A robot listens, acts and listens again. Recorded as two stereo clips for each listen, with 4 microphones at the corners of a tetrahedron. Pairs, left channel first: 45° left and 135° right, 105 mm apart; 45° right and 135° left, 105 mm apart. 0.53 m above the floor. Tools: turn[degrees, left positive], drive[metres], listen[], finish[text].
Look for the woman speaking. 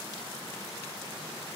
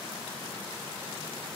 Action: listen[]
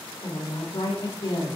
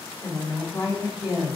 Action: finish[Found it: a woman speaking, straight ahead, 1 to 2 m away.]